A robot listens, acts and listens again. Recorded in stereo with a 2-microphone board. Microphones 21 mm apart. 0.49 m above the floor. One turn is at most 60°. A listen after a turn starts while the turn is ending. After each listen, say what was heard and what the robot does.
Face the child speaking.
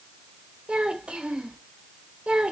The child speaking: about 55° right or 125° right. Turn 55° right.
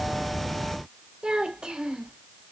So it is at 55° right. Turn 55° right.
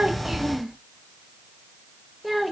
Facing the child speaking.